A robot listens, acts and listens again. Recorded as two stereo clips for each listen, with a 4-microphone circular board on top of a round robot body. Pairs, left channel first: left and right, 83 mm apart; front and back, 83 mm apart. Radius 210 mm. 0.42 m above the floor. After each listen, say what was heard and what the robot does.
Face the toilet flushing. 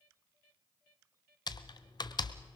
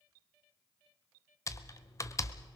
Keep listening.
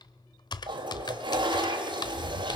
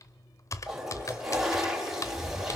The toilet flushing: 95° right. Turn 95° right.
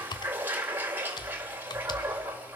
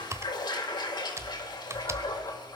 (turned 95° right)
The toilet flushing is now 25° right. Turn 25° right.
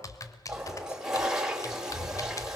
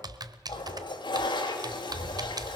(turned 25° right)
The toilet flushing is now 10° right. Turn 10° right.
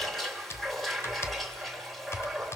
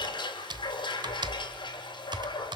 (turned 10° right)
Facing the toilet flushing, 2 to 4 m away.